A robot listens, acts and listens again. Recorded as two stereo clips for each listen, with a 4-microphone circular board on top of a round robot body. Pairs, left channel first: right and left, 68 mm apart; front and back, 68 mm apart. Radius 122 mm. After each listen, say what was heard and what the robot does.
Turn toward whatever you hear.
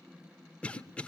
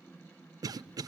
The cough: 160° right. Turn 160° right.
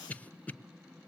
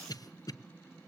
The cough is now 20° right. Turn 20° right.
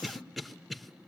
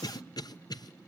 Facing the cough, under 1 m away.